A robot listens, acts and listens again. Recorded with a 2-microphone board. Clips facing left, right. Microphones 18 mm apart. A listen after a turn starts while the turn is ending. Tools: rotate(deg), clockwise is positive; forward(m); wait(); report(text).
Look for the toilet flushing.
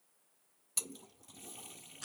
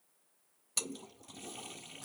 rotate(20)
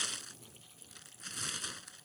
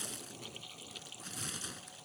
rotate(140)
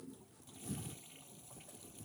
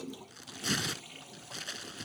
rotate(35)
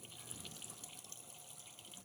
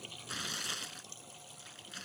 rotate(15)
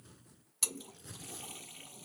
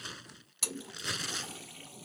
report("Found it: a toilet flushing, straight ahead.")